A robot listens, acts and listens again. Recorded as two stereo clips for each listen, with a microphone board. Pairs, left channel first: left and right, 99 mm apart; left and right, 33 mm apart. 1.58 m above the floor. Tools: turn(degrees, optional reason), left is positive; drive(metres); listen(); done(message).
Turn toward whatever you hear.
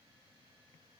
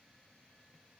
listen()
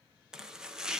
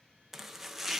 turn(degrees=-30)
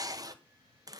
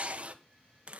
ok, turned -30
turn(degrees=-140, reason="So it is at 140° right.")
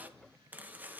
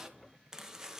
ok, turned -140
turn(degrees=-15, reason="The chopping is now 15° right.")
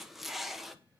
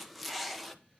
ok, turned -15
done("Facing the chopping, 1 to 2 m away.")